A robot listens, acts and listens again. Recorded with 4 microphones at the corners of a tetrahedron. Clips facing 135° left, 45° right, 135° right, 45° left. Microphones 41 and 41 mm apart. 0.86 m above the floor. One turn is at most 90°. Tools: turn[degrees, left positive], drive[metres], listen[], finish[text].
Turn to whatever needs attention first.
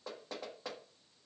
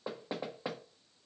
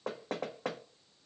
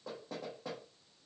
Action: listen[]
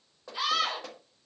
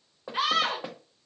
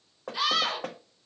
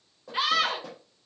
Thought: The scream: 10° right.
Action: turn[-10]
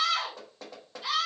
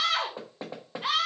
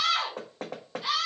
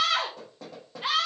Action: finish[Found it: a scream, straight ahead.]